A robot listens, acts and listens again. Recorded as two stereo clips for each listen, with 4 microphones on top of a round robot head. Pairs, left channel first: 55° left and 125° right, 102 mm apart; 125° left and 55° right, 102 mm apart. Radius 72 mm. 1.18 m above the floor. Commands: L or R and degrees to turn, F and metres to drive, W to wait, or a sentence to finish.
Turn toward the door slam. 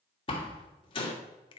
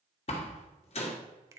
L95
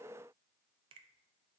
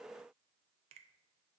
I heard a door slam from this way, but can't make it out now.